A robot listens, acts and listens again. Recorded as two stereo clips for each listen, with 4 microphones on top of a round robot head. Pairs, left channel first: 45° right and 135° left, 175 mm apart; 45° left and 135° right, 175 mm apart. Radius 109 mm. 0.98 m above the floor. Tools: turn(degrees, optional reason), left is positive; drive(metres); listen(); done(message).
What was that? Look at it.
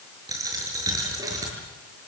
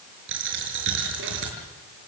turn(degrees=-155, reason="The dropped coin: 155° right.")
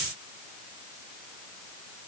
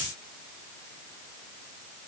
done("Facing where the dropped coin came from. I can't hear it now.")